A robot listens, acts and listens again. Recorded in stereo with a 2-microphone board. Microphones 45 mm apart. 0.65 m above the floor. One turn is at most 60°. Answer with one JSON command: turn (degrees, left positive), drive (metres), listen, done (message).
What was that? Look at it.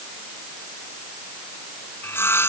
{"turn": 60}
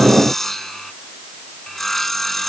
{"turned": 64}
{"turn": 10}
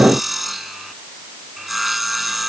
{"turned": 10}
{"done": "Facing the sawing."}